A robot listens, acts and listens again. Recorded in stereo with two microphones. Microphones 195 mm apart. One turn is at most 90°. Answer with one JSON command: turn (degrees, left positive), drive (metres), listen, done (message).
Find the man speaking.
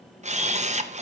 {"listen": true}
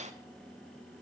{"listen": true}
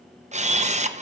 {"done": "I can't make out a man speaking, only a camera shutter."}